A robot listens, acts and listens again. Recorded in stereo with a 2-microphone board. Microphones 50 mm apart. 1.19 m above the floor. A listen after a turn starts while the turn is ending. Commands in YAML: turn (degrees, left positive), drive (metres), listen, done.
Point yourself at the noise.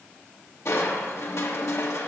turn: 60
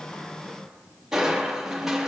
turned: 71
turn: -10
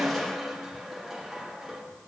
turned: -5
done: "Found it: crushing, straight ahead, 1 to 2 m away."